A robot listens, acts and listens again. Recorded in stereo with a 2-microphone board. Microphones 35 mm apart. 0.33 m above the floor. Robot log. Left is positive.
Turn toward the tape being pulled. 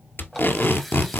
note: The tape being pulled: about 75° left or 105° left.
cmd yaw +75
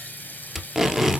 end: Found it: tape being pulled, straight ahead.